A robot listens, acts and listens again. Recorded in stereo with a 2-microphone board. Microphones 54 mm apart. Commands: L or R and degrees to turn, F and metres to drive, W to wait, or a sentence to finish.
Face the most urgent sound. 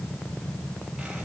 W
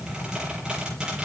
W
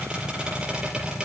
I can't make out anything urgent, only a squeak.